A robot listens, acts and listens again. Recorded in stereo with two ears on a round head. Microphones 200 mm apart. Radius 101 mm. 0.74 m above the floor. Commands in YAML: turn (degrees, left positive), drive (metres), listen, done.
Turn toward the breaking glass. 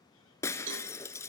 turn: 30
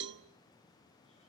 listen: true
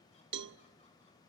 done: "I heard breaking glass, but can't make it out now. It was about 15° right or 135° left."